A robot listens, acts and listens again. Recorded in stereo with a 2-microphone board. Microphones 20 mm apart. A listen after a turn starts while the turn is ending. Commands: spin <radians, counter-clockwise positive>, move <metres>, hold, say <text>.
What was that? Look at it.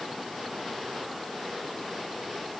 hold
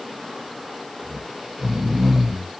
spin -0.52
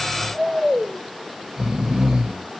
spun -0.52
spin -2.09
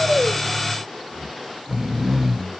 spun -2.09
spin -0.17
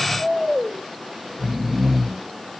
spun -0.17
say Found it: snoring, straight ahead, under 1 m away.